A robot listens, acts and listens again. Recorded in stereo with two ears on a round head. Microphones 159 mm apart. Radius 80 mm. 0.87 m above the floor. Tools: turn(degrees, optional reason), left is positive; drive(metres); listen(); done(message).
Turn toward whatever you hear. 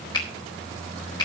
turn(degrees=25, reason="The finger snap: about 25° left or 155° left.")
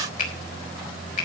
turn(degrees=130, reason="So it is at 130° left.")
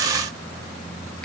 listen()
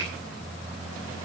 listen()
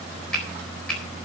done("Facing the finger snap, 2 to 4 m away.")